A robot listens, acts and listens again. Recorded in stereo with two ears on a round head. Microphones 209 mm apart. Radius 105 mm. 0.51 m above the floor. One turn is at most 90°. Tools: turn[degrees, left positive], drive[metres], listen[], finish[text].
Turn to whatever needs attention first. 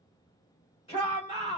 Thought: The shout: about 25° left or 155° left.
Action: turn[25]
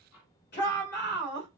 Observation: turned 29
Thought: So it is at 120° left.
Action: turn[90]
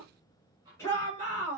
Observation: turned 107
Thought: The shout is now 15° left.
Action: turn[15]
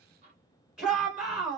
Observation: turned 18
Action: finish[Facing the shout.]